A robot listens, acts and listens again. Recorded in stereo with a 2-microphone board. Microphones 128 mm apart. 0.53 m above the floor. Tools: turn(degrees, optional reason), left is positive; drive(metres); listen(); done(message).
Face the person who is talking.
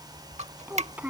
turn(degrees=-30)
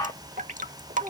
listen()
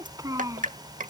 turn(degrees=-155, reason="So it is at 155° right.")
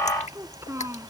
turn(degrees=-25, reason="The child speaking is now 25° right.")
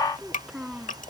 done("Found it: a child speaking, straight ahead.")